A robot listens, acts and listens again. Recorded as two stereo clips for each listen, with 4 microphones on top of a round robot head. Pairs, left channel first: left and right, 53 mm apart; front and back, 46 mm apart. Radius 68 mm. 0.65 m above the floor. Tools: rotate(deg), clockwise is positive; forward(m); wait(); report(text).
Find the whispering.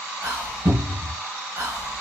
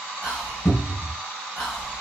rotate(85)
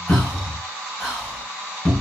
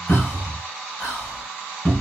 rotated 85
rotate(-10)
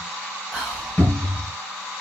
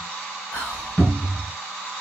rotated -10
report("Facing the whispering, 1 to 2 m away.")